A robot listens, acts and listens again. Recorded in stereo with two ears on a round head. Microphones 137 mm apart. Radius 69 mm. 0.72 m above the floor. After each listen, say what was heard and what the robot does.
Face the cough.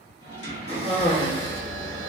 The cough: about 40° left or 140° left. Turn 40° left.
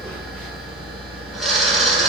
Keep listening.
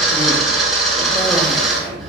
Keep listening.
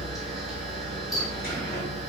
I heard a cough, but can't make it out now. It was about straight ahead or 100° left.